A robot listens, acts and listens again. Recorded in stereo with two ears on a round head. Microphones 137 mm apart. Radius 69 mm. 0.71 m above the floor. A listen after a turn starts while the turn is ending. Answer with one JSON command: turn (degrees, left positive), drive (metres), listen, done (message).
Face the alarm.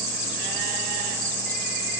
{"listen": true}
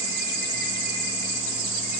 {"listen": true}
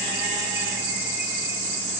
{"done": "I can't make out an alarm to turn to."}